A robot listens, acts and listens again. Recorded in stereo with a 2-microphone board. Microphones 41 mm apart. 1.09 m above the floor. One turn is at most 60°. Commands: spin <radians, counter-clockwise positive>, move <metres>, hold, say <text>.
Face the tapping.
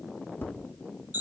spin 0.87
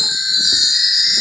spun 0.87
hold
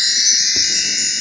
hold
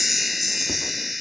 say I heard tapping, but can't make it out now. It was about straight ahead or 80° left.